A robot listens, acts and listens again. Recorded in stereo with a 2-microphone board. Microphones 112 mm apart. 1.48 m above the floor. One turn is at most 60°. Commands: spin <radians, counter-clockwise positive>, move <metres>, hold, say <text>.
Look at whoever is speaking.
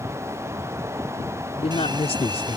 spin 1.05
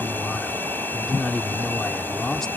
say Found it: a man speaking, straight ahead.